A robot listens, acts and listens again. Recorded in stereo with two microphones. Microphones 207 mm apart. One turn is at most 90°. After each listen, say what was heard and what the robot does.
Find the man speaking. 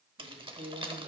The man speaking: about 55° right or 125° right. Turn 55° right.
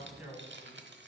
So it is at 10° right. Turn 10° right.
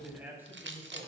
The man speaking is now 10° right. Turn 10° right.
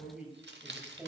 The man speaking is now 10° right. Turn 10° right.
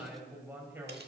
The man speaking is now 10° right. Turn 10° right.
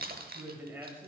The man speaking is now 10° right. Turn 10° right.
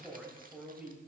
Facing the man speaking.